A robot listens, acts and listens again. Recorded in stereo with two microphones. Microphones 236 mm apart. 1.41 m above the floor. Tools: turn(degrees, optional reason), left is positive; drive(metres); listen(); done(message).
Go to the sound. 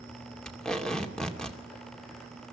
turn(degrees=30)
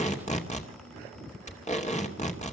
turn(degrees=150, reason="So it is at 150° left.")
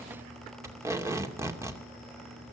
turn(degrees=-10, reason="The tape being pulled is now 10° right.")
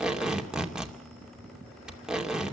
drive(metres=1.0)
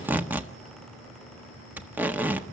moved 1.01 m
turn(degrees=-10, reason="The tape being pulled is now 10° right.")
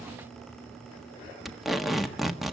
drive(metres=1.0)
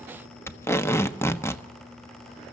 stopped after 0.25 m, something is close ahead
turn(degrees=10, reason="The tape being pulled is now 10° left.")
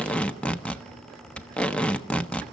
done("Arrived at the tape being pulled, straight ahead.")